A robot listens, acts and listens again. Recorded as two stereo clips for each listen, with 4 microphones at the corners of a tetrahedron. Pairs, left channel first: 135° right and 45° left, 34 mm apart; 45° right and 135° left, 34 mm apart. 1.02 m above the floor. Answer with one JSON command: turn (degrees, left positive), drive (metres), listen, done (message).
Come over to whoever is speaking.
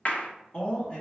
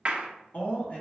{"turn": -70}
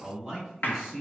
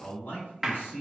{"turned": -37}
{"turn": -35}
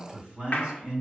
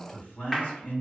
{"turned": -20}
{"turn": -15}
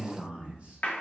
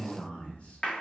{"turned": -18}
{"drive": 1.0}
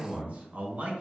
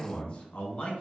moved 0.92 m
{"turn": 10}
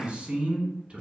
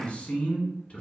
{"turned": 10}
{"drive": 1.0}
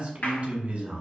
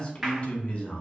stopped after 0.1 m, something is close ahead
{"done": "I am next to the man speaking."}